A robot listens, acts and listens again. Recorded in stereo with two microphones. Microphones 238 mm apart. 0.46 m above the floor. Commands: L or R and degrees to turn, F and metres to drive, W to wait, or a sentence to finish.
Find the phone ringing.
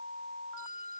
W
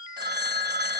R45
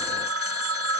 R85
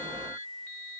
W
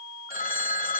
L40
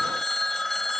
Found it: a phone ringing, straight ahead.